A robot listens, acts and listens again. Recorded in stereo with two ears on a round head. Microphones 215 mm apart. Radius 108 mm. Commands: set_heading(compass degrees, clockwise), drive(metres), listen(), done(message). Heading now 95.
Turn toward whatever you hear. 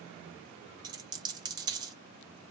set_heading(115)
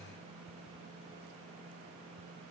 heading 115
listen()
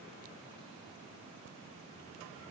done("I heard a dropped coin, but can't make it out now. It was about straight ahead or 140° right.")